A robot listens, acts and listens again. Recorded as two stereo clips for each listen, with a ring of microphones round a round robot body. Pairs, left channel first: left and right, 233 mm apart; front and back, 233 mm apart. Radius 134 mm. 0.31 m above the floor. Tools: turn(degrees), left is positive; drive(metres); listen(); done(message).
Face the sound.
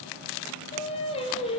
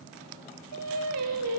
turn(degrees=160)
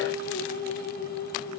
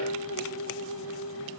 turn(degrees=40)
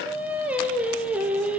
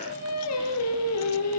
done("Facing the singing.")